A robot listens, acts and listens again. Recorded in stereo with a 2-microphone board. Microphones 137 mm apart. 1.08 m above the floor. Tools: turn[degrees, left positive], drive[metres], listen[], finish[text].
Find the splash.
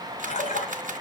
Thought: The splash: about 70° left or 110° left.
Action: turn[70]
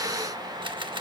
Action: listen[]
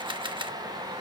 Action: finish[I heard a splash, but can't make it out now. It was about straight ahead or 40° left.]